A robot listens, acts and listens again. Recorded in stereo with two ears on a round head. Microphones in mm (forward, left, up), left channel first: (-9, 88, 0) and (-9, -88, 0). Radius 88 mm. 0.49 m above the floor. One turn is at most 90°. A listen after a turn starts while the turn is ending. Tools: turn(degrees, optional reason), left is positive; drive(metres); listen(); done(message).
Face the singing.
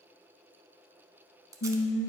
turn(degrees=70, reason="The singing: about 70° left or 110° left.")
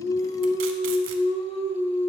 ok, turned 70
turn(degrees=40, reason="So it is at 40° left.")
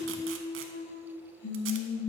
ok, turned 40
turn(degrees=70, reason="The singing is now 70° left.")
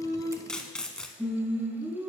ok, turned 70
turn(degrees=-10, reason="The singing is now 10° right.")
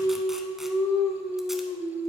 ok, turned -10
done("Facing the singing.")